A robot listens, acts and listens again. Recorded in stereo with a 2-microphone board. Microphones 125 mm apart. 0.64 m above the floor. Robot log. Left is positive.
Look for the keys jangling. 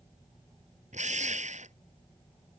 cmd idle
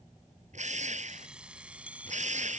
cmd yaw -30
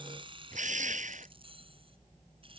note: So it is at 135° right.
cmd yaw -135
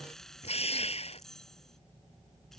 end: Found it: keys jangling, straight ahead.